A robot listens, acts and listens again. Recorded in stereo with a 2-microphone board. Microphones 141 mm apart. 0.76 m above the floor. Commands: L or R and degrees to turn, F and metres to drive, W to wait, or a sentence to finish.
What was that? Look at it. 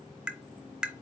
R30
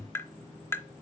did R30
L20
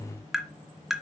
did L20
Facing the tapping, under 1 m away.